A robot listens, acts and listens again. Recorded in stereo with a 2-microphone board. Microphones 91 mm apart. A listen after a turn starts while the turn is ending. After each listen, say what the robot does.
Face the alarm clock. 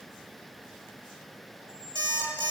Turn 55° right.
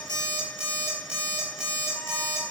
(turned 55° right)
Turn 15° right.
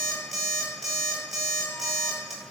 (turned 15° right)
Facing the alarm clock.